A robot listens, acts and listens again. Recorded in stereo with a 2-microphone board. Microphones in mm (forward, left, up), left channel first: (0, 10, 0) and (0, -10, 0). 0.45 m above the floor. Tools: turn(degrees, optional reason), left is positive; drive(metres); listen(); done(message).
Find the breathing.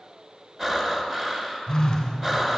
turn(degrees=-20, reason="The breathing: about 20° right or 160° right.")
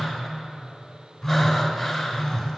listen()
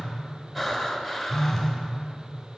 done("Facing the breathing, 1 to 2 m away.")